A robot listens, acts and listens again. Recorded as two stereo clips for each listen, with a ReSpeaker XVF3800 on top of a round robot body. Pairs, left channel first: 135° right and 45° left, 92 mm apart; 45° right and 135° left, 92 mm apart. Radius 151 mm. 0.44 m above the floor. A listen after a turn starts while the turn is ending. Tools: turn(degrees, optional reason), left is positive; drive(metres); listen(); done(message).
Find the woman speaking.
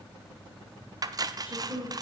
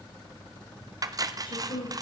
turn(degrees=-25, reason="The woman speaking: 25° right.")
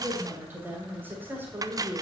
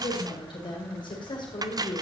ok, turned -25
turn(degrees=-20, reason="The woman speaking is now 20° right.")
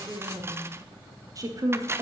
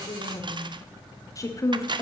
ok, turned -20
done("Facing the woman speaking, 1 to 2 m away.")